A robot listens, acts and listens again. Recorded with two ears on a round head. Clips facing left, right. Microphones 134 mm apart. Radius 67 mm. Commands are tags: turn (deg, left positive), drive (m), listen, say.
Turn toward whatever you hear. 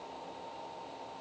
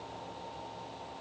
<listen/>
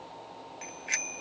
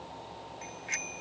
<turn deg="65"/>
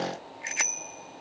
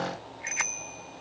<turn deg="40"/>
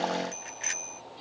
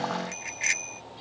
<turn deg="-15"/>
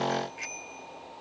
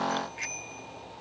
<say>Facing the bicycle bell.</say>